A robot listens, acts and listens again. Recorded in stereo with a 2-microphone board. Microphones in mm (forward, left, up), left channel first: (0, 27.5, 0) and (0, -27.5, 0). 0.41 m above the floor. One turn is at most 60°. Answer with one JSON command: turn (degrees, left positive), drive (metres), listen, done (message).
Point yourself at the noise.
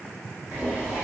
{"turn": -25}
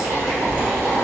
{"turn": -60}
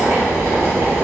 {"turn": -60}
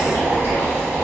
{"turn": -40}
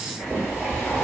{"done": "Facing the boiling."}